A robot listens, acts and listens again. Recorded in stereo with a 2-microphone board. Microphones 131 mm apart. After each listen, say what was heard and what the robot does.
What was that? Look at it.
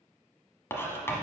The writing: about 20° left or 160° left. Turn 20° left.
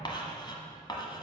So it is at 140° left. Turn 140° left.
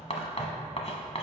The writing is now 55° left. Turn 55° left.
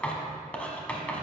The writing is now 10° left. Turn 10° left.
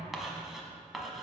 Found it: writing, straight ahead, 1 to 2 m away.